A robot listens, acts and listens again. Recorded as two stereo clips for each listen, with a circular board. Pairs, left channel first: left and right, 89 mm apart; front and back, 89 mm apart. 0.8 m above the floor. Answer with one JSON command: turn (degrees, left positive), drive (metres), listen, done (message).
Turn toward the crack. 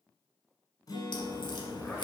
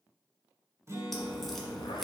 {"turn": 85}
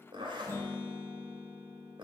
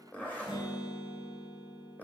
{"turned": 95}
{"turn": -10}
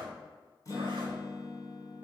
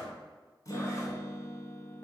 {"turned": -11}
{"done": "Facing where the crack came from. I can't hear it now."}